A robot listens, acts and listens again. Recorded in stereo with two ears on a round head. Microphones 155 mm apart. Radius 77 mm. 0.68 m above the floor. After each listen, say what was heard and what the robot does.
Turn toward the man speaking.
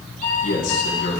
Turn 90° left.
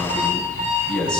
Facing the man speaking, over 4 m away.